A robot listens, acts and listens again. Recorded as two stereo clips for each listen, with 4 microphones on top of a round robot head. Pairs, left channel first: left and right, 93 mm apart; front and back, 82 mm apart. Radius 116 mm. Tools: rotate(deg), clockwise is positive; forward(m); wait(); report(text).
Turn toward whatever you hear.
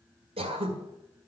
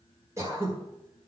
rotate(120)
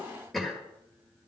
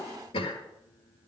report("Found it: throat clearing, straight ahead.")